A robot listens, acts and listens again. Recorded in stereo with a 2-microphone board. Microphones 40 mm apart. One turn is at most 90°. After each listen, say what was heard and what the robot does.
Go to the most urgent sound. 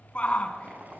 The shout: about 30° left or 150° left. Turn 30° left.
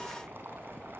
Keep listening.
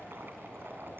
Keep listening.
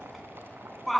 Drive 1.0 m forward.
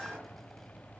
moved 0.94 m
Keep listening.
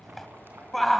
Drive 1.0 m forward.
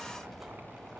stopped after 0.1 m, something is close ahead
Keep listening.
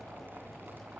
Keep listening.
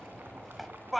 Arrived at the shout, straight ahead.